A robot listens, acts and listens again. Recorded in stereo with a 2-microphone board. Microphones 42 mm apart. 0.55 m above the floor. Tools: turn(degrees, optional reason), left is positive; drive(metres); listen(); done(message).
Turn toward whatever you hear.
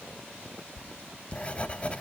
turn(degrees=30, reason="The writing: about 30° left or 150° left.")
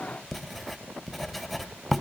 done("Found it: writing, straight ahead, 1 to 2 m away.")